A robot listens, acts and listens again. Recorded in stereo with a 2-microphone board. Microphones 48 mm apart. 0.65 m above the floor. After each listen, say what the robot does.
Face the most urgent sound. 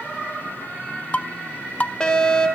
Turn 20° left.
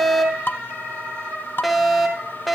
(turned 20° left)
Facing the fire alarm, over 4 m away.